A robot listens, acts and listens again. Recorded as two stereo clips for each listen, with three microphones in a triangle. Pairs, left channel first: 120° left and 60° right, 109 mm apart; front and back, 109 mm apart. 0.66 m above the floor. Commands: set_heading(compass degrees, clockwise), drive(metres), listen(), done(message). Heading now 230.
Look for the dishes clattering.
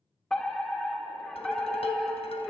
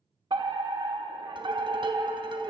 set_heading(90)
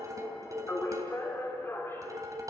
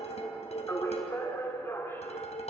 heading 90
done("Facing the dishes clattering, 2 to 4 m away.")